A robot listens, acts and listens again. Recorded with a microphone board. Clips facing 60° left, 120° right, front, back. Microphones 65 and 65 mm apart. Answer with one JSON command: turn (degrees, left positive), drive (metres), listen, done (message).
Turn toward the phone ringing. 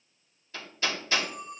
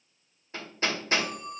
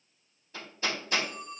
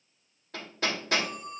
{"turn": -120}
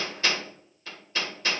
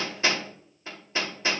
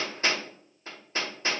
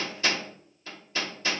{"listen": true}
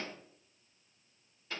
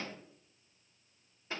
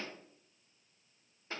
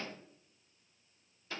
{"listen": true}
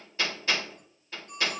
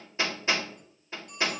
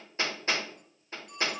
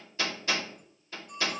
{"done": "Found it: a phone ringing, straight ahead, 2 to 4 m away."}